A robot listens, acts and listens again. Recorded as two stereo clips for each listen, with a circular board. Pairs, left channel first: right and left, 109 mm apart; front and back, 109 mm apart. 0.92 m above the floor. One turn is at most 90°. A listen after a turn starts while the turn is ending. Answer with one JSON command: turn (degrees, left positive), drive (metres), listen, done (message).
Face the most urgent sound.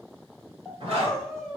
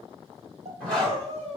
{"turn": -90}
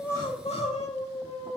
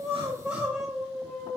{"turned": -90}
{"turn": -90}
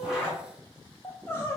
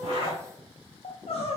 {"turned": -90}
{"turn": -25}
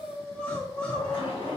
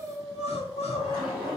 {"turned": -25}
{"turn": -10}
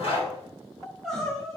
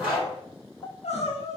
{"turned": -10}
{"done": "Facing the crying."}